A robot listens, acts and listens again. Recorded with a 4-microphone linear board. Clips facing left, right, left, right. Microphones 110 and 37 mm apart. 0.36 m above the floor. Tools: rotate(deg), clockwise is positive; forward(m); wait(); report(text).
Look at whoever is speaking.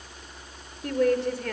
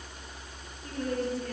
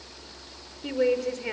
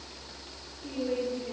rotate(-70)
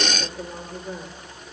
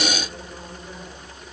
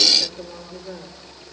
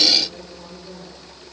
wait()
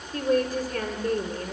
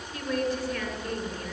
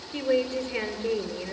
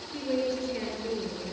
rotate(-35)
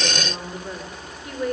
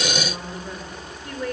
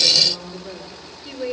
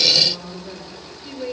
rotate(-10)
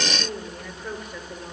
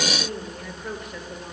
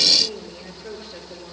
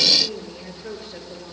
report("Found it: a woman speaking, straight ahead, over 4 m away.")